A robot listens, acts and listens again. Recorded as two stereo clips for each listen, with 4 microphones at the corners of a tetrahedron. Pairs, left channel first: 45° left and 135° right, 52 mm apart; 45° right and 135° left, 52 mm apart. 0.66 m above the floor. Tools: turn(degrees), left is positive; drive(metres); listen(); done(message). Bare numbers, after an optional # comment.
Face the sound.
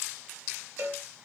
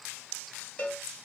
# The cowbell: 105° right.
turn(-105)
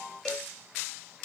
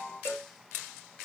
# The cowbell is now 30° right.
turn(-30)
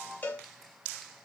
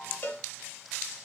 done("Facing the cowbell.")